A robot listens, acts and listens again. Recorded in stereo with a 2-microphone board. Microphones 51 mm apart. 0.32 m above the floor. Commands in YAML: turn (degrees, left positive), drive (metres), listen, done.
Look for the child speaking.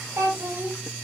turn: -70
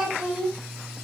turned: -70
turn: -15
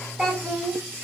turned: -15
done: "Found it: a child speaking, straight ahead, 1 to 2 m away."